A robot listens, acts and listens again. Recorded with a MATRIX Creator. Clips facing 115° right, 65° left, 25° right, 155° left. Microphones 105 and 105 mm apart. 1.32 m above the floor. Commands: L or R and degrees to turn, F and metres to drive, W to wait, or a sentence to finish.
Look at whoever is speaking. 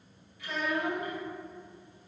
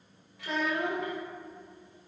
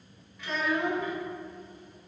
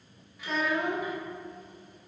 L75
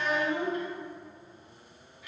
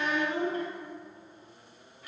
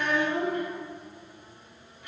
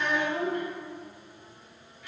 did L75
L15
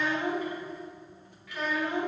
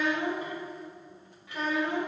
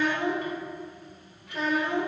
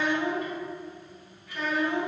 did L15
Found it: a child speaking, straight ahead.